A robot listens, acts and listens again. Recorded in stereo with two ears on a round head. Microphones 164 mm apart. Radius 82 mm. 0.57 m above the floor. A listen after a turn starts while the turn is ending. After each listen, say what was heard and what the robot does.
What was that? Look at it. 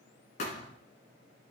The thud: about 40° left or 140° left. Turn 40° left.
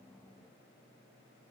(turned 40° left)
Keep listening.
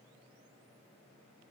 I heard a thud, but can't make it out now. It was about straight ahead or 100° left.